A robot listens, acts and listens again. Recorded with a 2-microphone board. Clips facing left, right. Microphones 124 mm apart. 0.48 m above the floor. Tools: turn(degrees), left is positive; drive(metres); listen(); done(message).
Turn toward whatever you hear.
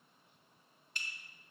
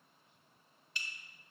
turn(degrees=45)
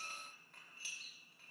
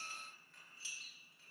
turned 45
turn(degrees=80)
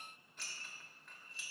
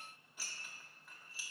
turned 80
turn(degrees=-10)
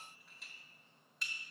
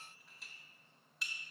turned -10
done("Facing the dishes clattering.")